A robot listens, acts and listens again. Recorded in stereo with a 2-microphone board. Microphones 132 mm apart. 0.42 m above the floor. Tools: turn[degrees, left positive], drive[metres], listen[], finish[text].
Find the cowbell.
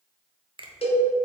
Thought: The cowbell: about 50° left or 130° left.
Action: turn[50]
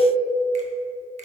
Action: listen[]
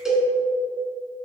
Action: finish[Facing the cowbell, 1 to 2 m away.]